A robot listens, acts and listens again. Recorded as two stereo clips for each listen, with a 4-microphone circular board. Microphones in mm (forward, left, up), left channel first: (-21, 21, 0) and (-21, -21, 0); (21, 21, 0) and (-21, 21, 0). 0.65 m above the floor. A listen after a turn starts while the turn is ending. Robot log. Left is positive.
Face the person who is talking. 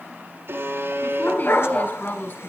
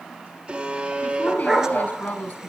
note: The woman speaking: 50° left.
cmd yaw +50
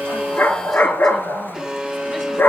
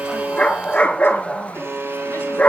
cmd idle
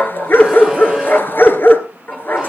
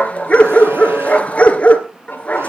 cmd idle
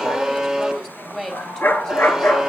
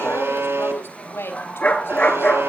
note: The woman speaking is now 10° left.
cmd yaw +10
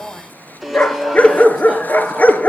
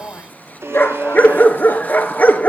cmd idle
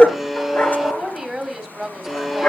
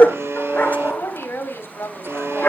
end: Facing the woman speaking, over 4 m away.